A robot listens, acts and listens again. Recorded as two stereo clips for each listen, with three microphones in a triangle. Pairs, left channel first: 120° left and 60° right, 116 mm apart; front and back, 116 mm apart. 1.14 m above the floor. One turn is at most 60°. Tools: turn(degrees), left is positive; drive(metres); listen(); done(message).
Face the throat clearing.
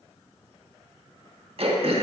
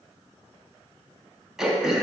turn(degrees=-60)
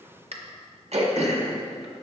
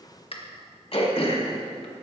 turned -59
turn(degrees=-35)
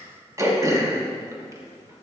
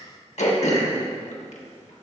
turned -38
done("Facing the throat clearing.")